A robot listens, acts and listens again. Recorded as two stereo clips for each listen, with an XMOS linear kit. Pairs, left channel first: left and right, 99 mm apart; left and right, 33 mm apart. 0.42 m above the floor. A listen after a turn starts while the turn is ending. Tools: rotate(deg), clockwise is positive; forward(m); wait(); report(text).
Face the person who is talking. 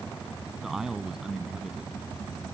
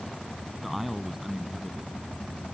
rotate(30)
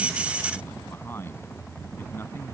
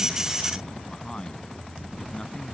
wait()
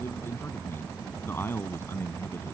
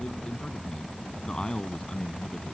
rotate(-25)
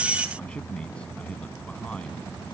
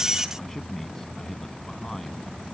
rotate(-10)
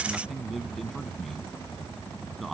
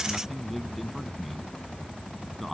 report("Found it: a man speaking, straight ahead.")